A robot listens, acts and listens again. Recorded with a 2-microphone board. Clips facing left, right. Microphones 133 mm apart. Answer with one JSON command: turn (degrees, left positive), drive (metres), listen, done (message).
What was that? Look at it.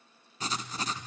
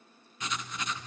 {"turn": 35}
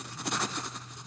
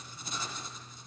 {"turn": 110}
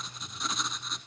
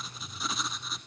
{"done": "Facing the writing, 1 to 2 m away."}